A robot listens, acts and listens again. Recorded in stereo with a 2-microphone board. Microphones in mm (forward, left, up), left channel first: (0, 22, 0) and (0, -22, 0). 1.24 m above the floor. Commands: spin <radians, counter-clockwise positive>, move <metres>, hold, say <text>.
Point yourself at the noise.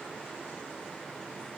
hold
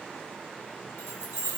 spin 1.31
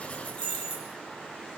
spin 0.61
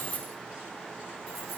say Facing the keys jangling.